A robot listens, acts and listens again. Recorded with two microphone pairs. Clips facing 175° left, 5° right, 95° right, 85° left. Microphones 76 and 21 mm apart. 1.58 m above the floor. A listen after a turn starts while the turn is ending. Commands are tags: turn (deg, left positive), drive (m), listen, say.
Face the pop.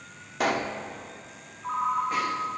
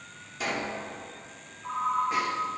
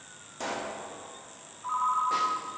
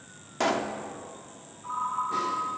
<turn deg="145"/>
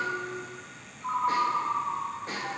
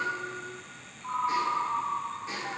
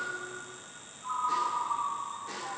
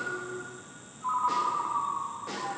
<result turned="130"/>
<turn deg="15"/>
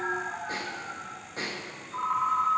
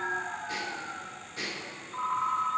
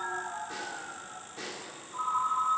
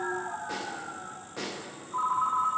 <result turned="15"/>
<say>I heard a pop from this way, but can't make it out now.</say>